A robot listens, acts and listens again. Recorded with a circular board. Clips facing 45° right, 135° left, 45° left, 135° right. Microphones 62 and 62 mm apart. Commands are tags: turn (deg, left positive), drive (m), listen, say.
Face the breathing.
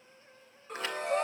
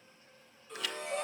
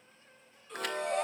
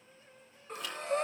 <turn deg="-85"/>
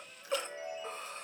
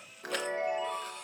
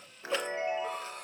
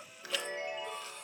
<turn deg="10"/>
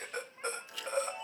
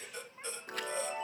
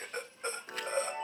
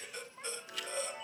<say>Found it: breathing, straight ahead.</say>